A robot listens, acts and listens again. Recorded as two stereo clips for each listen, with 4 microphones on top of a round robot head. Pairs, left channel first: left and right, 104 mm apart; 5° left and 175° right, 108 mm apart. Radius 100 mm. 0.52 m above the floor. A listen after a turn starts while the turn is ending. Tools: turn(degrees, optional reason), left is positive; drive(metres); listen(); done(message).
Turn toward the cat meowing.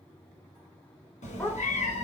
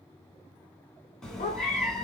turn(degrees=90, reason="The cat meowing: 90° left.")
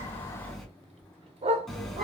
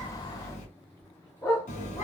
done("Found it: a cat meowing, straight ahead, 1 to 2 m away.")